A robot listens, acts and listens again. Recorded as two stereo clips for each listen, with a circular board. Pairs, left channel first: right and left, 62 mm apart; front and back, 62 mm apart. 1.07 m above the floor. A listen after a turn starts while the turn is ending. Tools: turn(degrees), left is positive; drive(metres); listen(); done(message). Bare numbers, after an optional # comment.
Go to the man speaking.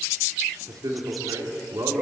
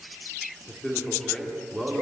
# The man speaking: 80° left.
turn(80)
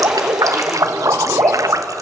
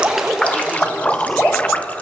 listen()
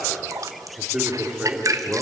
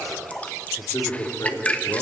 # The man speaking is now 15° left.
turn(15)
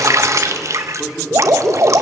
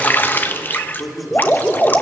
drive(1.0)
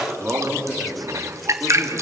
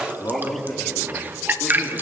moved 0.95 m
# The man speaking is now 15° left.
turn(15)
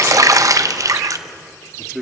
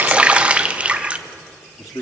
drive(1.0)
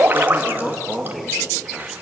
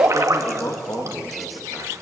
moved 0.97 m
drive(1.0)
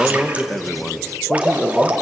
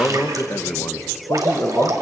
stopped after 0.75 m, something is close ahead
done("Arrived at the man speaking, straight ahead.")